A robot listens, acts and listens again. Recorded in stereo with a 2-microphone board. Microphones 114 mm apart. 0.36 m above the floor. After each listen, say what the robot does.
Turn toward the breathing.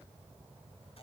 Keep listening.
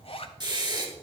Turn 40° right.
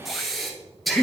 Found it: breathing, straight ahead, 1 to 2 m away.